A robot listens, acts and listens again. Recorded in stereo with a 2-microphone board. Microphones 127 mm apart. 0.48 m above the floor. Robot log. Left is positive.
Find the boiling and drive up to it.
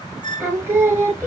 cmd idle
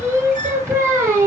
cmd idle
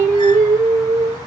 end: I can't make out boiling to turn to.